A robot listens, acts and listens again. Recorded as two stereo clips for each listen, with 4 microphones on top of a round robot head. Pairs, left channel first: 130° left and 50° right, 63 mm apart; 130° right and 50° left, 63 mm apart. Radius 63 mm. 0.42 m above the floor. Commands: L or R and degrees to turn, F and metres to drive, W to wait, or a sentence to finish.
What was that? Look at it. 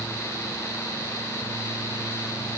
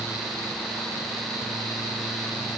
W
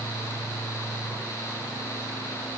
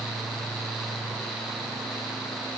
W
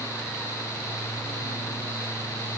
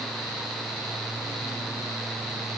I can't make out anything.